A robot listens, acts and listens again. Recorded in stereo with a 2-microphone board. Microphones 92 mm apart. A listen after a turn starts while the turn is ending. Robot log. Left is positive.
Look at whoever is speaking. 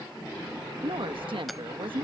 note: The woman speaking: about 70° right or 110° right.
cmd yaw -70
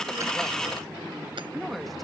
cmd idle
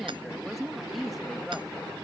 end: Found it: a woman speaking, straight ahead.